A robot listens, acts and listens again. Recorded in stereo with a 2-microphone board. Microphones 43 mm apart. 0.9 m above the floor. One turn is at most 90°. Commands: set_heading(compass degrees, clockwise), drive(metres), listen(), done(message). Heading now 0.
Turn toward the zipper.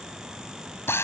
listen()
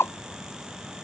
listen()
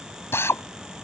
done("I can't make out a zipper to turn to.")